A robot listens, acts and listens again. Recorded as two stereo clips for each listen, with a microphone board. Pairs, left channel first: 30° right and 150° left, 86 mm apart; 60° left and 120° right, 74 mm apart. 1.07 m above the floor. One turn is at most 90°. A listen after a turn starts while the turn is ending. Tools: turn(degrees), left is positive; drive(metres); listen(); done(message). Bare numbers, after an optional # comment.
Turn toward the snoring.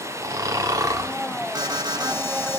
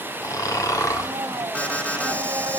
# The snoring: 100° left.
turn(90)
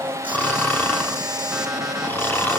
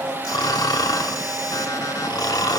# The snoring is now 40° left.
turn(40)
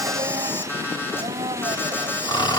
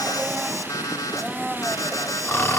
done("Facing the snoring.")